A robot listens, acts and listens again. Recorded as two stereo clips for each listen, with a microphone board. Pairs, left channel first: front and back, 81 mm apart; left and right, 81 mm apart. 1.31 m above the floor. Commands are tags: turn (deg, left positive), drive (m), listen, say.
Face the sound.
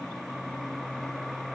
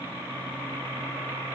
<listen/>
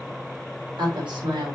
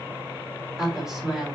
<turn deg="-175"/>
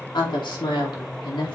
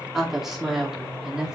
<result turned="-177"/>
<turn deg="-10"/>
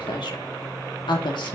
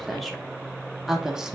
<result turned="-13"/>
<turn deg="-10"/>
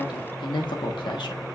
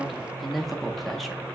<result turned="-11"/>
<say>Found it: a woman speaking, straight ahead.</say>